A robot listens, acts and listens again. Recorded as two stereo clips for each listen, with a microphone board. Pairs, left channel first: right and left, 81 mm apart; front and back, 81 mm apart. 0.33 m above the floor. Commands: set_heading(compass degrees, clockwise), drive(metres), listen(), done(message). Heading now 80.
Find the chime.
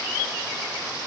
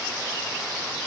listen()
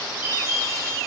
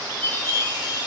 set_heading(160)
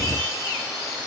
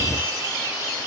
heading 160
listen()
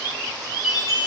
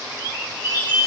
done("Facing the chime.")